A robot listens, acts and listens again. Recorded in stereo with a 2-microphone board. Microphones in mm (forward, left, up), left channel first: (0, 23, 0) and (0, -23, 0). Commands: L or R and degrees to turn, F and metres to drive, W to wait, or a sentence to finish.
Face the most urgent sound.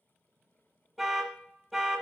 R30
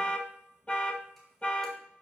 L25
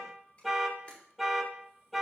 Found it: an alarm, straight ahead.